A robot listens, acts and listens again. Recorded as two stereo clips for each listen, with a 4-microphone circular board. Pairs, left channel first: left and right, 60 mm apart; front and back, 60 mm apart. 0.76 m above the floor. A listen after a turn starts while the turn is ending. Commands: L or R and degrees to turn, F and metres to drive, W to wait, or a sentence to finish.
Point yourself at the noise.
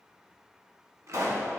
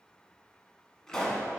R80
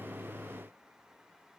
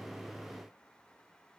I heard a pop from this way, but can't make it out now.